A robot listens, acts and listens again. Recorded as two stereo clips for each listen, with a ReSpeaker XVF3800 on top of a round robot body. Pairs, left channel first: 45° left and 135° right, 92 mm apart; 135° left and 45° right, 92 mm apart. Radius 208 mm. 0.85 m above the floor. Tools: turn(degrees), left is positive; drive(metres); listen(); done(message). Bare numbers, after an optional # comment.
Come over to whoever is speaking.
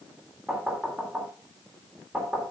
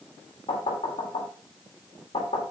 listen()
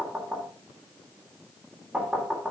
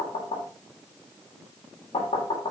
listen()
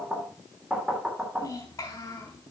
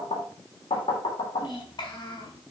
# The child speaking: 95° left.
turn(95)
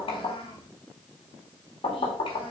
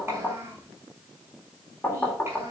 # The child speaking is now 15° left.
turn(15)
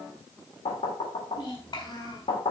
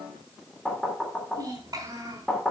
drive(1.0)
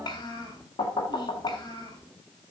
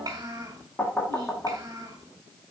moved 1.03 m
drive(1.0)
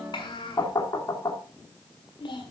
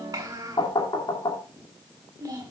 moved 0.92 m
drive(1.0)
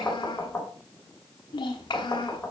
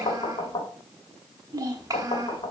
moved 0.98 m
drive(1.0)
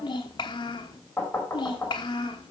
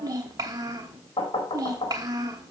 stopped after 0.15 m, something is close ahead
done("Arrived at the child speaking, straight ahead.")